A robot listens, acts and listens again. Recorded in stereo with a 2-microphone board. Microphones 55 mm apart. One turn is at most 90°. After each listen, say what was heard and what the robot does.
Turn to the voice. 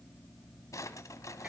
Keep listening.
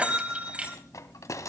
Keep listening.
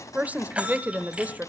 The woman speaking: about 30° right or 150° right. Turn 30° right.
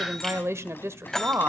So it is at 115° right. Turn 90° right.
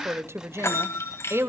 The woman speaking is now 65° right. Turn 65° right.
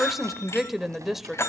Found it: a woman speaking, straight ahead.